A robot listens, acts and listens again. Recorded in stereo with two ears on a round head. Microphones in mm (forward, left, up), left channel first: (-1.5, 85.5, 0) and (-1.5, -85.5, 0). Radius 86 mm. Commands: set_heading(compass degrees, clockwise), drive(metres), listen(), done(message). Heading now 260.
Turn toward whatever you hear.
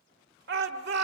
set_heading(320)
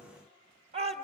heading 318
set_heading(353)
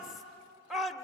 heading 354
done("Facing the shout, 1 to 2 m away.")